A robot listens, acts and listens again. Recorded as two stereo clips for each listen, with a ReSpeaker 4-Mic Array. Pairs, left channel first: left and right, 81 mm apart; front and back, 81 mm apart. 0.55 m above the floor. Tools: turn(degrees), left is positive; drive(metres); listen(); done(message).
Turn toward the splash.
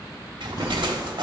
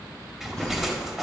turn(degrees=-95)
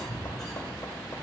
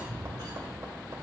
done("Facing where the splash came from. I can't hear it now.")